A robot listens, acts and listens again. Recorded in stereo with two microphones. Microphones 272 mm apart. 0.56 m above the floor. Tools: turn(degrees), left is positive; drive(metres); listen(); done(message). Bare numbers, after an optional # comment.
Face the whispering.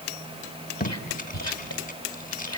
# The whispering: about 70° left or 110° left.
turn(70)
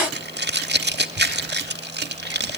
listen()
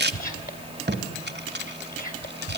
# So it is at 35° left.
turn(35)
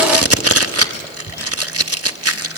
# The whispering is now 15° left.
turn(15)
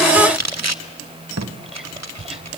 done("Facing the whispering.")